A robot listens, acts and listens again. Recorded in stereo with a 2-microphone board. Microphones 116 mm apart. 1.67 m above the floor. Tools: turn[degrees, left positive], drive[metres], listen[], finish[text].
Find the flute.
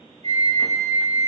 Thought: The flute: about 65° right or 115° right.
Action: turn[-65]
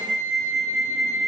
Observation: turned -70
Action: finish[Facing the flute, under 1 m away.]